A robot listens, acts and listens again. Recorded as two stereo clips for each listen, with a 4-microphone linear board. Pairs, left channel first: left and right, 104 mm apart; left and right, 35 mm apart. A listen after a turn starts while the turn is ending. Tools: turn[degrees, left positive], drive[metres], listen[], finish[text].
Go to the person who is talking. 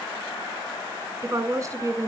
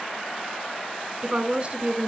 Thought: The woman speaking: about 30° right or 150° right.
Action: turn[-30]
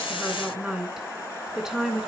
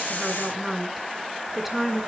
Action: drive[1.0]
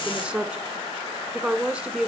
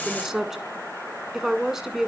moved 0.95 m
Thought: The woman speaking is now 10° right.
Action: turn[-10]
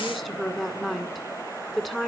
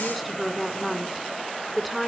Action: drive[1.0]
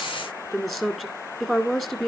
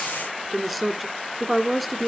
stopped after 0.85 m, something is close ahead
Action: finish[Arrived at the woman speaking, straight ahead.]